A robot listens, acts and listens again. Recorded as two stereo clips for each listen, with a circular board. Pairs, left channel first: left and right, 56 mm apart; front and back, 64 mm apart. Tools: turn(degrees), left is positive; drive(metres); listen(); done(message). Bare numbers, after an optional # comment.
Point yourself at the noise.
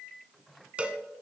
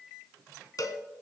# The cowbell: 25° right.
turn(-25)
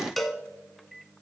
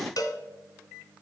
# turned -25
done("Found it: a cowbell, straight ahead.")